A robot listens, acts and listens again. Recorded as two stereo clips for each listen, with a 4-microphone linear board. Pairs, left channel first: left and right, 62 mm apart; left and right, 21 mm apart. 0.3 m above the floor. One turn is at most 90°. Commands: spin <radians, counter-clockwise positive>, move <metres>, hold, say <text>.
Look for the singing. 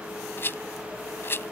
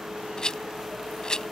hold
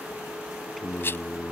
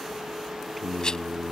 spin 0.52
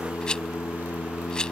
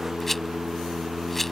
spin 1.57
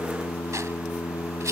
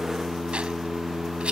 spin 0.96
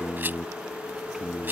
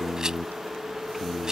spin -0.17
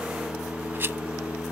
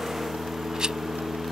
say Found it: singing, straight ahead.